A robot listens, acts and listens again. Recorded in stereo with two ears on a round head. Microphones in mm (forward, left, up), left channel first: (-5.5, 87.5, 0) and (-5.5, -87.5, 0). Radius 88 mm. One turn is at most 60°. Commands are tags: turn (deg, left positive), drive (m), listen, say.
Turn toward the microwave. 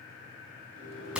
<turn deg="-60"/>
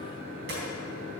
<turn deg="-45"/>
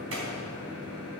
<say>Found it: a microwave, straight ahead.</say>